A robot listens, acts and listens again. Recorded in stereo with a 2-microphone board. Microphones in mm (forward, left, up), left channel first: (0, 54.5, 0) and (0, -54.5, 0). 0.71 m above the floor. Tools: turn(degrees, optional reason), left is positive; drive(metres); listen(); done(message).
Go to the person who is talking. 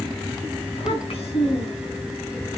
turn(degrees=65, reason="The child speaking: about 65° left or 115° left.")
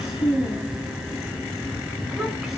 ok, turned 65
drive(metres=1.0)
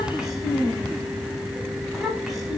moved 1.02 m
drive(metres=1.0)
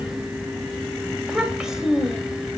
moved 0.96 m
drive(metres=1.0)
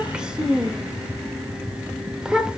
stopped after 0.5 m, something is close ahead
done("I am next to the child speaking.")